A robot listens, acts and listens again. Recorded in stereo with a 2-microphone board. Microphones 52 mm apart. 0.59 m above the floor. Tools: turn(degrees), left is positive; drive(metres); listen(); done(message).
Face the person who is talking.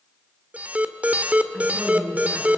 turn(degrees=-35)
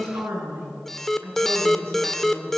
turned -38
turn(degrees=-115)
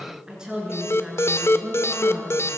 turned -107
turn(degrees=-15)
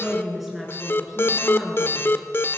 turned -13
done("Found it: a woman speaking, straight ahead.")